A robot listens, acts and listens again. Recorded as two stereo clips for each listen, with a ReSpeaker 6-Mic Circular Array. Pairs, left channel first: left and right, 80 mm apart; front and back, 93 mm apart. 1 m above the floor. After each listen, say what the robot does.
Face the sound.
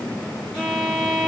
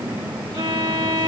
Turn 165° right.
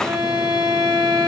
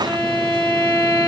Turn 70° right.
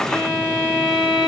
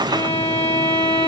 Turn 10° right.
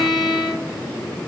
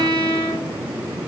Facing the violin, 2 to 4 m away.